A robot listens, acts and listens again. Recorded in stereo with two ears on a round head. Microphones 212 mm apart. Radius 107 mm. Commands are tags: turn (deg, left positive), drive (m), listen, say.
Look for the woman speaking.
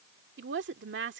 <turn deg="-50"/>
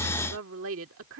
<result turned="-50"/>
<turn deg="-70"/>
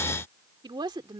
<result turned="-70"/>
<turn deg="-20"/>
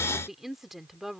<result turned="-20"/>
<say>Found it: a woman speaking, straight ahead.</say>